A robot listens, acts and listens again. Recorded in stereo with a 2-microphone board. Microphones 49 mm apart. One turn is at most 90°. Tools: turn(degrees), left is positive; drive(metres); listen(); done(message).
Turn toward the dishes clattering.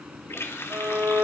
listen()
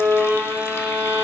listen()
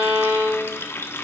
done("I can't make out dishes clattering, only a violin and a running tap.")